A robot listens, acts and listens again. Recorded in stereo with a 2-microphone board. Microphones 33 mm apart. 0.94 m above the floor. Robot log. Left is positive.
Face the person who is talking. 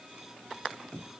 cmd idle
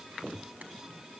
cmd idle
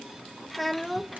cmd yaw +30
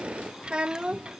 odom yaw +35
note: So it is at 30° right.
cmd yaw -30
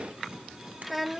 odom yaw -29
end: Found it: a child speaking, straight ahead, under 1 m away.